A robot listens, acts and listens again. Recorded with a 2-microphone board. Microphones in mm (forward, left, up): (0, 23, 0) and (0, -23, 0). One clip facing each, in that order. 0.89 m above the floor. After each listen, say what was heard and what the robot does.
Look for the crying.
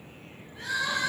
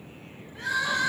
The crying: about 55° right or 125° right. Turn 55° right.
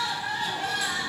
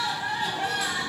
So it is at 45° right. Turn 45° right.
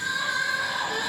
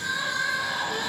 Found it: crying, straight ahead, 1 to 2 m away.